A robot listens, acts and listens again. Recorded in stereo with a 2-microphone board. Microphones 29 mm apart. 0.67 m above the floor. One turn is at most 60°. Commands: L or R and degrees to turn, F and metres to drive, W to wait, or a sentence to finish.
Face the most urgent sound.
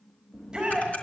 R25
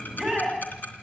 Facing the shout, over 4 m away.